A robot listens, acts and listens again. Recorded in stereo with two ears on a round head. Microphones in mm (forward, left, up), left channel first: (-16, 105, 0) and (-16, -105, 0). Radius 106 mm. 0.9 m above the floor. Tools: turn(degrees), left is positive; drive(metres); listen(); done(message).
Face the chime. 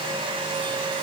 listen()
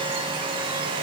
listen()
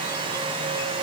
done("I can't make out a chime.")